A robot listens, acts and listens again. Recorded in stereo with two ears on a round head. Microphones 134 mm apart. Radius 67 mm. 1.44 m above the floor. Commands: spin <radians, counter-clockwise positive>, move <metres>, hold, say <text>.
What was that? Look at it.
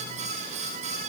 hold
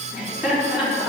spin -0.52
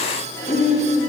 spin 0.26
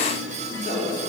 say Facing the laughter.